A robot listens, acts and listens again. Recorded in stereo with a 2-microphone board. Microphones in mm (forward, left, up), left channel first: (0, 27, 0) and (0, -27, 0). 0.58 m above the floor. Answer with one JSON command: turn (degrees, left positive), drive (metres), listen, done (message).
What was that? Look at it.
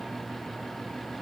{"listen": true}
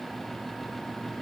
{"listen": true}
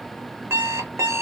{"turn": -70}
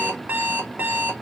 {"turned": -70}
{"turn": -35}
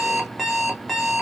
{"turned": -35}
{"done": "Facing the alarm clock."}